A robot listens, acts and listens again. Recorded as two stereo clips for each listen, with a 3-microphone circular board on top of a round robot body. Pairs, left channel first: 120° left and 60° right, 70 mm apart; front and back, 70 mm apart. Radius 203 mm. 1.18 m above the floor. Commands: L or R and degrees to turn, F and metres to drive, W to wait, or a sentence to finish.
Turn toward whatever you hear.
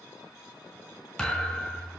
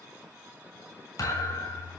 L40
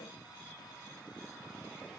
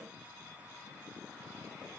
I heard a thud from this way, but can't make it out now.